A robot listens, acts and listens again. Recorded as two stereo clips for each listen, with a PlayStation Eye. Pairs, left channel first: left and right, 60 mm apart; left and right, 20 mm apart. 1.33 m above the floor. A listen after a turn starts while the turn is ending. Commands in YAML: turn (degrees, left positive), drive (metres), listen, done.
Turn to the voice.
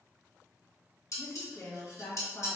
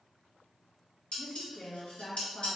turn: 45
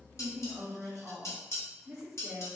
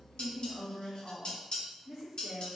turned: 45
done: "Facing the woman speaking, 1 to 2 m away."